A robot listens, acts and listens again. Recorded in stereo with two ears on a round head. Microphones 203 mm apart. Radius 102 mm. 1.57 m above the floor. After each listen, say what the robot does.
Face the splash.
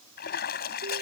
Turn 50° left.
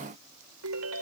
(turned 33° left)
Keep listening.
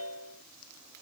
I heard a splash, but can't make it out now. It was about 15° left or 100° left.